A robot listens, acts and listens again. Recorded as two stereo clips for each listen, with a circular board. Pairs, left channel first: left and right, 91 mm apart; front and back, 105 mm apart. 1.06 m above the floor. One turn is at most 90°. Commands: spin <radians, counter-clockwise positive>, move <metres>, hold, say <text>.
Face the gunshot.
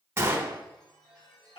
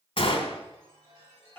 spin -0.44
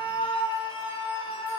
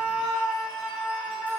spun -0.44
say Facing where the gunshot came from. I can't hear it now.